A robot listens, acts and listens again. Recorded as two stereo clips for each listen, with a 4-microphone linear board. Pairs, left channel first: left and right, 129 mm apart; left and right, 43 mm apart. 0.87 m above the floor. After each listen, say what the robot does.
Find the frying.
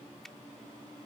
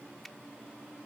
Keep listening.
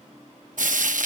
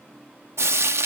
Turn 90° right.
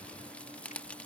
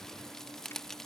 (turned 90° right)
Turn 10° left.
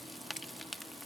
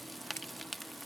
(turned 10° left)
Keep listening.
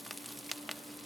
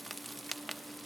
Found it: frying, straight ahead.